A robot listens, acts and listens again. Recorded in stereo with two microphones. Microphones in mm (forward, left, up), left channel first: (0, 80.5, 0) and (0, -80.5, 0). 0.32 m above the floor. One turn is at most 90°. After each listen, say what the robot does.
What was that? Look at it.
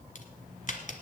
Turn 55° left.
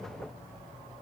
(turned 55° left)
Keep listening.
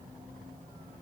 I heard a crack, but can't make it out now. It was about straight ahead or 70° left.